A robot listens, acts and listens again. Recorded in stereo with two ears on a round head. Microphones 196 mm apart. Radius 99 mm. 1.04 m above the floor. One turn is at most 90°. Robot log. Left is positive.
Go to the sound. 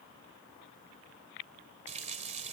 note: The running tap: about 30° right or 150° right.
cmd yaw -30
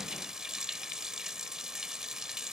cmd fwd 1.0
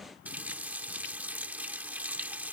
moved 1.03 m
note: The running tap is now 10° right.
cmd yaw -10
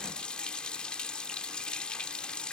cmd fwd 1.0
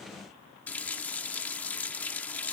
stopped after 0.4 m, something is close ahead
end: Arrived at the running tap, straight ahead.